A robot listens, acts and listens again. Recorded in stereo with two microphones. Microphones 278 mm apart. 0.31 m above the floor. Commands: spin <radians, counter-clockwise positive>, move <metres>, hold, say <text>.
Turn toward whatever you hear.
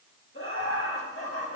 spin 0.87
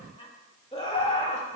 spin 0.44
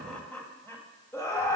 spin 0.26
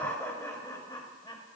spin 0.26
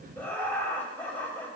say Facing the laughter, 1 to 2 m away.